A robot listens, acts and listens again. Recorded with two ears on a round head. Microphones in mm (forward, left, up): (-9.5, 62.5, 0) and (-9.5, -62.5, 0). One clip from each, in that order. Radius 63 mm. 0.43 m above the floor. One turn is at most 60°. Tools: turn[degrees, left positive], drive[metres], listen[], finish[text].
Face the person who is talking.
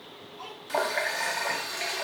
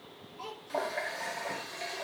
Action: turn[30]
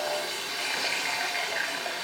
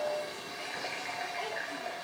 Action: listen[]
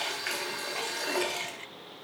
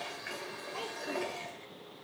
Action: listen[]
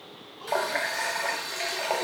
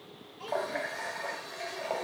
Action: finish[I heard a child speaking, but can't make it out now. It was about 30° right or 150° left.]